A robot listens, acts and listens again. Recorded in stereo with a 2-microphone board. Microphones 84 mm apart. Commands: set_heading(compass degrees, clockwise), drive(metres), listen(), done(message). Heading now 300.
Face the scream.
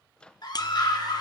set_heading(240)
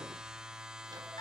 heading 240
set_heading(180)
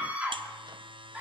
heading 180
set_heading(195)
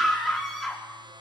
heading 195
done("Facing the scream.")